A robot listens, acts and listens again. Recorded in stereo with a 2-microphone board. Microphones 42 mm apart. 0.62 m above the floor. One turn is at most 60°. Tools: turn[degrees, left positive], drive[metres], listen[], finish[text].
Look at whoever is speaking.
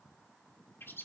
Action: listen[]
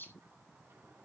Action: listen[]
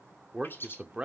Thought: The man speaking: about 25° right or 155° right.
Action: turn[-25]
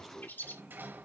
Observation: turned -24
Action: finish[Facing the man speaking.]